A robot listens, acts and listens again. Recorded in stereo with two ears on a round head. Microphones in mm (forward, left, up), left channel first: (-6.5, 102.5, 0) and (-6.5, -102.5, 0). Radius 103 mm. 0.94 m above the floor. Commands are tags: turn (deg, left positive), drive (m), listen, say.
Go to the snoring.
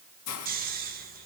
<turn deg="-40"/>
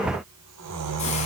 <turn deg="-100"/>
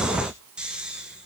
<drive m="1.0"/>
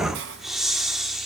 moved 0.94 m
<drive m="1.0"/>
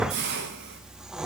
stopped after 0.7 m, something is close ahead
<say>Arrived at the snoring, straight ahead.</say>